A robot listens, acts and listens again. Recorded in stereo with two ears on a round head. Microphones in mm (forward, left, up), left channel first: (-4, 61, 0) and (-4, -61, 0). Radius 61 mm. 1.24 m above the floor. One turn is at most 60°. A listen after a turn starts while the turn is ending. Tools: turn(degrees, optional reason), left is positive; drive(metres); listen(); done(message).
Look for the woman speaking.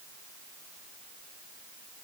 listen()
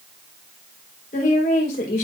turn(degrees=60, reason="The woman speaking: about 65° left or 115° left.")
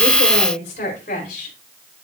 turn(degrees=60, reason="So it is at 60° left.")
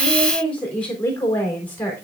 turn(degrees=15, reason="The woman speaking is now 15° left.")
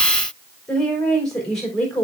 done("Facing the woman speaking.")